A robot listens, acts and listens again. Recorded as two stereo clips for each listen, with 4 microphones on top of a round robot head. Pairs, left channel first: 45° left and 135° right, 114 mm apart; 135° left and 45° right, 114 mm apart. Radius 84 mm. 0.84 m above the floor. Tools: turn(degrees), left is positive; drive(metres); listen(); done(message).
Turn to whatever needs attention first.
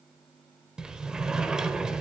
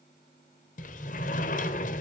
listen()
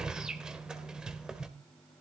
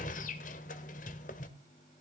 listen()
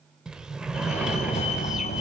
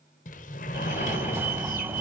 turn(degrees=25)
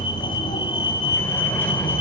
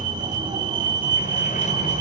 done("Found it: a fire alarm, straight ahead.")